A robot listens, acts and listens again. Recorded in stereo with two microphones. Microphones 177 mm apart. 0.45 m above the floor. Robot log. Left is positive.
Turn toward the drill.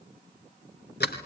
cmd idle
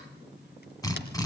note: The drill: about 20° left or 160° left.
cmd yaw +20
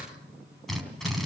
end: Facing the drill.